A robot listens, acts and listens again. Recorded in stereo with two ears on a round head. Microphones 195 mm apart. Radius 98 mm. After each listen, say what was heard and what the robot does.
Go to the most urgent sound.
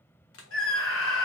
The scream: about 60° left or 120° left. Turn 60° left.
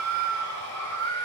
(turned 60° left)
So it is at 10° left. Turn 10° left.
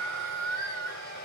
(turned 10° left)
Drive 1.0 m forward.
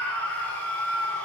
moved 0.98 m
Drive 1.0 m forward.
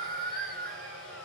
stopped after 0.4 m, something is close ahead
I am next to the scream.